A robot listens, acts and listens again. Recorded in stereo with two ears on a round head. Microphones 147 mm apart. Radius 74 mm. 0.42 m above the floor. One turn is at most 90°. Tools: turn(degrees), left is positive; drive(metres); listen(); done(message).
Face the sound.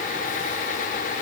listen()
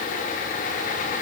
listen()
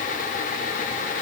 done("I can't make out anything to turn to.")